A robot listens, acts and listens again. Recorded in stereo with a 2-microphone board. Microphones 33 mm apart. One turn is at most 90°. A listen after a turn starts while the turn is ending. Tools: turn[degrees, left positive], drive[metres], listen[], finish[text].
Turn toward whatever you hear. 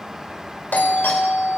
Thought: The doorbell: about 70° left or 110° left.
Action: turn[70]
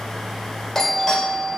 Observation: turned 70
Thought: So it is at 10° left.
Action: turn[10]
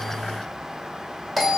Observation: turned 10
Action: finish[Facing the doorbell.]